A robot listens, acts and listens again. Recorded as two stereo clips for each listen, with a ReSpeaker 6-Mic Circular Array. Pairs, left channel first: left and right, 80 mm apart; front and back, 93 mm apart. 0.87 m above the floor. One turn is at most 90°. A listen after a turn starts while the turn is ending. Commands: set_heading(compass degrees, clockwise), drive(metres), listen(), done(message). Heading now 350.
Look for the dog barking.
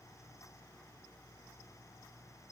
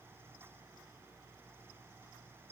listen()
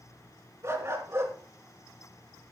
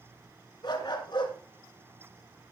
set_heading(25)
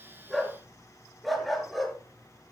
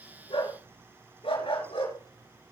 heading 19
done("Found it: a dog barking, straight ahead, over 4 m away.")